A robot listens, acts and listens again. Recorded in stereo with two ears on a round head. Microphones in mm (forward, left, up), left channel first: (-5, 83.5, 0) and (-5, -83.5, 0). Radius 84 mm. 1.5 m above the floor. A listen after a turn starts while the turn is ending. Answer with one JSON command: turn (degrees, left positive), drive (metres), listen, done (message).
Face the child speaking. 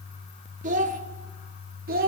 {"turn": -55}
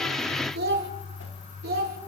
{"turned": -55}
{"turn": -55}
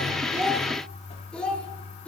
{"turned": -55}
{"turn": 10}
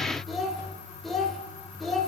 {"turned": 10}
{"done": "Facing the child speaking."}